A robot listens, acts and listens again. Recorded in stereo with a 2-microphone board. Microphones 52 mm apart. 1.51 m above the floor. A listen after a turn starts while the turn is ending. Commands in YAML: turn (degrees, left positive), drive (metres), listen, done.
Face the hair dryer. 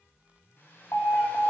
turn: 40
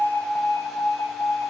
listen: true
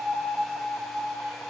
listen: true
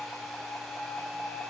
done: "I heard a hair dryer, but can't make it out now. It was about straight ahead or 100° left."